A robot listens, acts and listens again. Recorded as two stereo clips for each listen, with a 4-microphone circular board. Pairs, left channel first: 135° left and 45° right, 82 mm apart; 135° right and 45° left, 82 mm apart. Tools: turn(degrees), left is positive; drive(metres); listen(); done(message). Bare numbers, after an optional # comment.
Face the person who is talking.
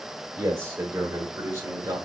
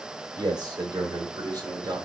# The man speaking: 10° left.
turn(10)
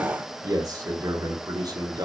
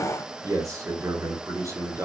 done("Facing the man speaking, 2 to 4 m away.")